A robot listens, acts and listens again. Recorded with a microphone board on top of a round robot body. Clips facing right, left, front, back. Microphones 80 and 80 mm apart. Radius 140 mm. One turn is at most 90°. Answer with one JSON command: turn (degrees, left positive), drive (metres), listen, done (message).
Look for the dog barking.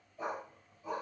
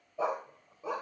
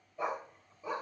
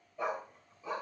{"turn": 70}
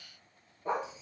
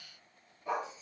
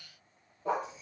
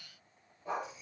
{"turn": -35}
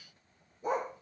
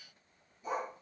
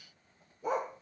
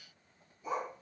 {"turn": -45}
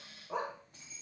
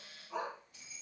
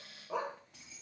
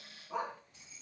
{"turn": -35}
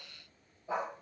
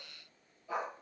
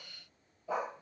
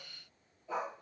{"turn": -20}
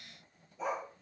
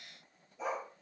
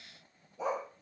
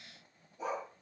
{"done": "Found it: a dog barking, straight ahead."}